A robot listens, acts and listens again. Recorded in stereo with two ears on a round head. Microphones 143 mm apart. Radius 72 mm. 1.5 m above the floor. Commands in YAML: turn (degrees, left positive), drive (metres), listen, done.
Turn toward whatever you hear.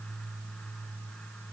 listen: true
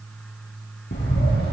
turn: 90
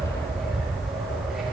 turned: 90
done: "Found it: a bird, straight ahead."